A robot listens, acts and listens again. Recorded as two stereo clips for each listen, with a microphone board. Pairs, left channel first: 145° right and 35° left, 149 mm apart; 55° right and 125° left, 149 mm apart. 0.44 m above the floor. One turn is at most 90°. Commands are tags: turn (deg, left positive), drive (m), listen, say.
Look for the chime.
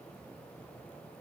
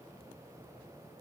<listen/>
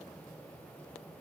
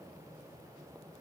<listen/>
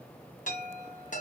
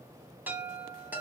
<turn deg="-90"/>
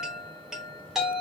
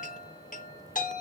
<turn deg="-50"/>
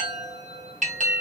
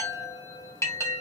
<turn deg="15"/>
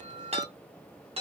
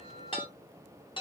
<say>Found it: a chime, straight ahead, 1 to 2 m away.</say>